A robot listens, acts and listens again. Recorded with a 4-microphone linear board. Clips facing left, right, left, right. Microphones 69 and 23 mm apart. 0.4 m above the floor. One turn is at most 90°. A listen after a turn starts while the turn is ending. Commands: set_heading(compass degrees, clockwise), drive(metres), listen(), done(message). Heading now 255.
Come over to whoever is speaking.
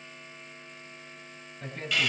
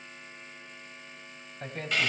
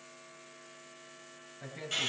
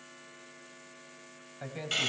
set_heading(315)
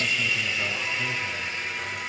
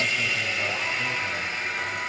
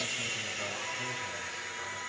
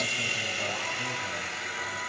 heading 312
listen()
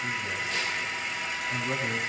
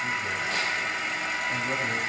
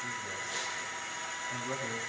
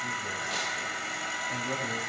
listen()
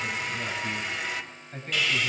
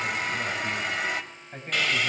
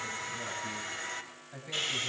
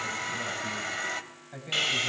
set_heading(332)
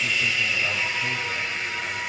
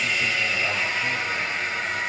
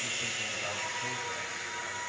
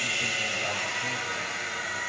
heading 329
listen()
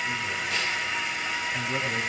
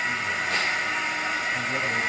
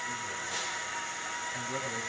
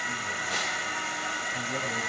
listen()
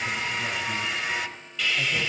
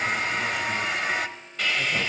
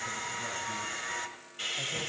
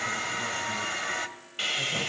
done("Facing where the man speaking came from. I can't hear it now. I did not reach it.")